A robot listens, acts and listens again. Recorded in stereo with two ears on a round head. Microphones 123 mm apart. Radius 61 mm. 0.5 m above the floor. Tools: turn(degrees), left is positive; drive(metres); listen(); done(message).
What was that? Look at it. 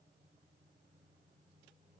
listen()
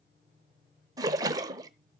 turn(degrees=-30)
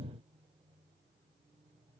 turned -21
listen()
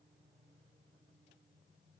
done("I heard a splash, but can't make it out now. It was about 5° right or 130° right.")